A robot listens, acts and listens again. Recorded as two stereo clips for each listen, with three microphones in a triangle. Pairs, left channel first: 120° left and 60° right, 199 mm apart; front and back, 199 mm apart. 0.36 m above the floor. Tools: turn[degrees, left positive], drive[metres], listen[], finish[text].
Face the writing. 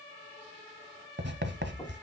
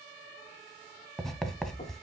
Thought: The writing: 90° right.
Action: turn[-90]
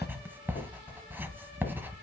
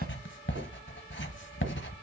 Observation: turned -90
Thought: The writing is now 20° left.
Action: turn[20]
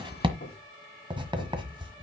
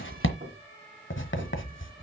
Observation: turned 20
Action: finish[Found it: writing, straight ahead.]